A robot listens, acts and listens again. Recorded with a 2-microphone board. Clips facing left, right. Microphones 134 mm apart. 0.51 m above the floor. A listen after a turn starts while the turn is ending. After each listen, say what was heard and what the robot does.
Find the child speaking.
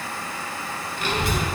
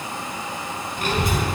The child speaking: about 50° right or 130° right. Turn 50° right.
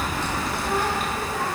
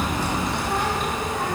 So it is at 10° left. Turn 10° left.
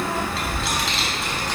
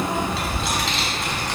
Facing the child speaking, 2 to 4 m away.